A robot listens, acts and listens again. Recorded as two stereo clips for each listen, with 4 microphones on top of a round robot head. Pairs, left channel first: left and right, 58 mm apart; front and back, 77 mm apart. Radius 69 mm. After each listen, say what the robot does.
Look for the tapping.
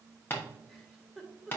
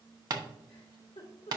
Turn 150° left.
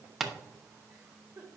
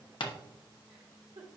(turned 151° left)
Found it: tapping, straight ahead, 1 to 2 m away.